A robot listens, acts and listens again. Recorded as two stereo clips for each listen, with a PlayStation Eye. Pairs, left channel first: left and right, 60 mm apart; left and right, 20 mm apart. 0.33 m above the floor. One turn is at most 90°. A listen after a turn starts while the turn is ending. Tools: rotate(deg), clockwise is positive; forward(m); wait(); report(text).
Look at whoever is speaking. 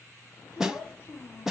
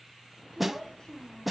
rotate(-40)
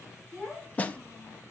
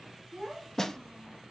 rotate(-15)
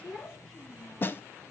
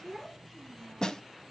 rotate(-10)
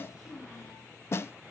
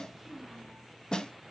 report("Facing the child speaking, over 4 m away.")